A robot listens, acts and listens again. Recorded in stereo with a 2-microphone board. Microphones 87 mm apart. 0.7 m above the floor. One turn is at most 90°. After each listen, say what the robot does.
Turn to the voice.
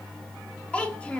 Turn 15° left.
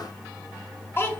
Turn 90° left.
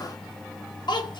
Turn 80° left.
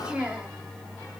Turn 15° right.
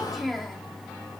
Found it: a child speaking, straight ahead, under 1 m away.